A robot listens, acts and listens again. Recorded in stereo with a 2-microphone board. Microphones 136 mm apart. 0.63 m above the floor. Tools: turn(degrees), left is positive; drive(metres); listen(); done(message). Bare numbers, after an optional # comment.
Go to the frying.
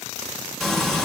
turn(30)
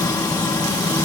# So it is at 150° left.
turn(150)
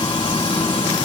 # The frying is now 50° left.
turn(50)
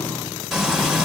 drive(1.0)
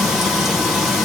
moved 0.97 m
drive(1.0)
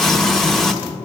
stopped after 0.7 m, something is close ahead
done("Arrived at the frying, straight ahead.")